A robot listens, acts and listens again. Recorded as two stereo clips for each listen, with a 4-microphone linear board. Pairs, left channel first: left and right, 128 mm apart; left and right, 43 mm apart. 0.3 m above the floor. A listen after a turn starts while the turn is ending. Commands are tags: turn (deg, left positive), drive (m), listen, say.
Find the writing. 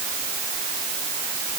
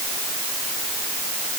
<listen/>
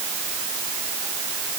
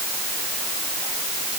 <listen/>
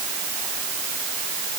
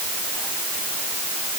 <say>I can't make out writing to turn to.</say>